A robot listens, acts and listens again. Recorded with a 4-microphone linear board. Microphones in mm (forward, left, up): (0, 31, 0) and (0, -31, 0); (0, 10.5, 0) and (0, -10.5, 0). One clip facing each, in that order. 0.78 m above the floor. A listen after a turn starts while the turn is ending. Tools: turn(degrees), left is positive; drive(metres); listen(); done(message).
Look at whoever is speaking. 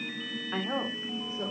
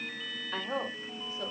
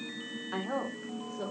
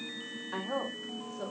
turn(degrees=30)
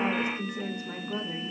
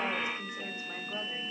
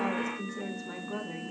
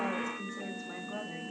turn(degrees=120)
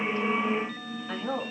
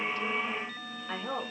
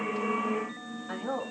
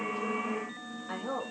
turn(degrees=-15)
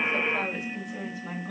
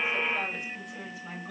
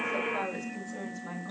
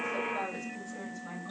done("Facing the woman speaking, over 4 m away.")